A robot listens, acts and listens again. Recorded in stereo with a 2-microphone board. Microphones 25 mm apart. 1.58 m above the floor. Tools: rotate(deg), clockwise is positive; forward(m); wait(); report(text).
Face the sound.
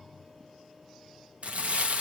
rotate(60)
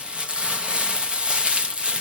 rotate(50)
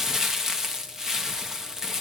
rotate(20)
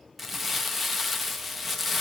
report("Facing the crumpling, 1 to 2 m away.")